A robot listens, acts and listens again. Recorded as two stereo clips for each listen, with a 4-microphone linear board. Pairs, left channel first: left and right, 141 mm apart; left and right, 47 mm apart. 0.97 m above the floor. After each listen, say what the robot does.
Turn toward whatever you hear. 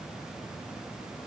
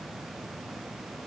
Keep listening.
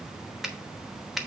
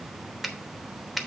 Turn 30° left.
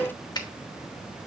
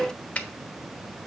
Turn 150° left.
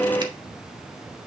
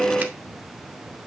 Keep listening.
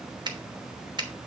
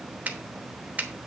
Turn 35° right.
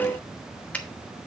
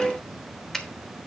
Turn 10° left.
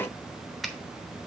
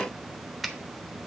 Facing the finger snap.